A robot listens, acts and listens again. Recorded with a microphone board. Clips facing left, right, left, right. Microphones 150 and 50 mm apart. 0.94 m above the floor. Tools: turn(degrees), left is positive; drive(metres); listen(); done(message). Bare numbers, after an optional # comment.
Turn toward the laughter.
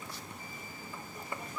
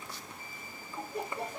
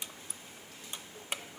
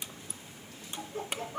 # The laughter: about 75° right or 105° right.
turn(-75)
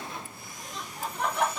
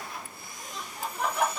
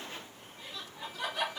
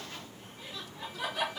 done("Facing the laughter.")